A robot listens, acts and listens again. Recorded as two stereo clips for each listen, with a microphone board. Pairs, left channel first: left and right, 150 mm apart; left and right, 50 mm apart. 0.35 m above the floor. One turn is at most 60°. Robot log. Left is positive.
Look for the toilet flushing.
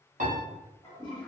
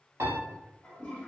note: The toilet flushing: about 35° left or 145° left.
cmd yaw +35
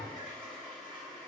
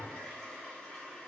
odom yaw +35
end: Found it: a toilet flushing, straight ahead, 1 to 2 m away.